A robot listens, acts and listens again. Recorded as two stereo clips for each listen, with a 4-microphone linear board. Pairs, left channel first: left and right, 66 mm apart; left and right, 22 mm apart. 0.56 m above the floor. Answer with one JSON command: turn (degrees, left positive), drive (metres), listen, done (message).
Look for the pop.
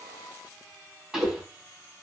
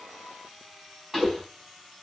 {"turn": -30}
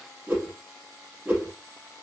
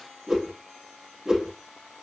{"listen": true}
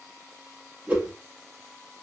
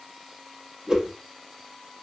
{"done": "I heard a pop, but can't make it out now. It was about 25° left or 145° right."}